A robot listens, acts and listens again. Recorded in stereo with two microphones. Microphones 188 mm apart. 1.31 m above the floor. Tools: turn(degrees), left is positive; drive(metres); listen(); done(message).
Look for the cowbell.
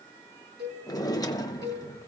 turn(degrees=-65)
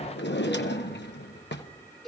done("Found it: a cowbell, straight ahead.")